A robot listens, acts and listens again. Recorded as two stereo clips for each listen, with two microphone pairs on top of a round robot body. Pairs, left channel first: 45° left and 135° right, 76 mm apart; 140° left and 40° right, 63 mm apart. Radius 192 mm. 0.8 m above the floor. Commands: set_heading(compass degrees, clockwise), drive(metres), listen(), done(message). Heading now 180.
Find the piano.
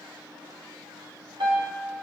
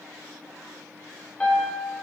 set_heading(330)
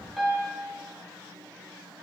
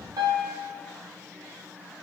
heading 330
set_heading(15)
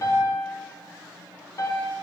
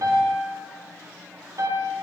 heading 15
done("Facing the piano, under 1 m away.")